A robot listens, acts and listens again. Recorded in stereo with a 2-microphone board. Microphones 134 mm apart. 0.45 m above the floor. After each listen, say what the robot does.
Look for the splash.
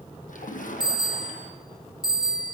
Turn 90° left.
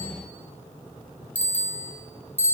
Facing where the splash came from. I can't hear it now.